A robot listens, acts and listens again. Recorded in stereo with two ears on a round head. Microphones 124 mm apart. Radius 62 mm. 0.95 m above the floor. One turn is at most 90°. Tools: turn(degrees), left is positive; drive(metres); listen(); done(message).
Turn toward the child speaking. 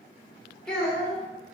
turn(degrees=30)
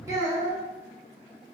turn(degrees=-25)
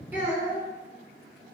turn(degrees=-15)
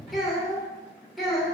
done("Facing the child speaking, 1 to 2 m away.")